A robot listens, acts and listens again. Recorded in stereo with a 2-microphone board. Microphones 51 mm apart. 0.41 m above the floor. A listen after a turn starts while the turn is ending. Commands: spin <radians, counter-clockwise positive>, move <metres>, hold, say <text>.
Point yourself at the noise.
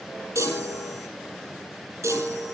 spin -1.57
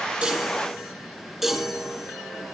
say Found it: a chime, straight ahead.